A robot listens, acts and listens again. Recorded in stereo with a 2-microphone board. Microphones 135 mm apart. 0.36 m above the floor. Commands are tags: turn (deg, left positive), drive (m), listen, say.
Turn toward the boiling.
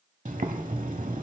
<turn deg="-70"/>
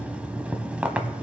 <turn deg="-10"/>
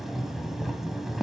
<say>Facing the boiling, under 1 m away.</say>